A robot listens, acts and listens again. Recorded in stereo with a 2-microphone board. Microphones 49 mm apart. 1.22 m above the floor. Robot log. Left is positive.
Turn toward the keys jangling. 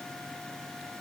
cmd idle
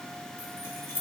note: The keys jangling: about 60° left or 120° left.
cmd yaw +60
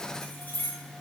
note: So it is at 35° left.
cmd yaw +35
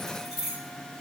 note: The keys jangling is now 10° right.
cmd yaw -10
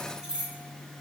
note: The keys jangling is now 20° right.
cmd yaw -20
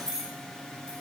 note: The keys jangling is now 10° right.
cmd yaw -10
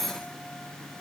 end: Facing the keys jangling, 1 to 2 m away.